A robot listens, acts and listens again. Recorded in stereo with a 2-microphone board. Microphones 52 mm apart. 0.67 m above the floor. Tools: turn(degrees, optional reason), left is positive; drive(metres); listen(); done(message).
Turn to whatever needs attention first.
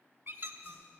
listen()
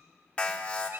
turn(degrees=25, reason="The alarm: about 25° left or 155° left.")
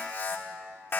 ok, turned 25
turn(degrees=130, reason="So it is at 130° left.")
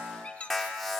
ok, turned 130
done("Facing the alarm, 1 to 2 m away.")